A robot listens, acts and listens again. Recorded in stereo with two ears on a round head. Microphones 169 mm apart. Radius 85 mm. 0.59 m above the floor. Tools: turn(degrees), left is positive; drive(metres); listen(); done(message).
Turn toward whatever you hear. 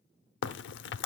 turn(degrees=65)
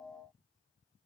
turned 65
listen()
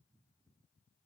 done("I heard a crack, but can't make it out now. It was about straight ahead or 50° left.")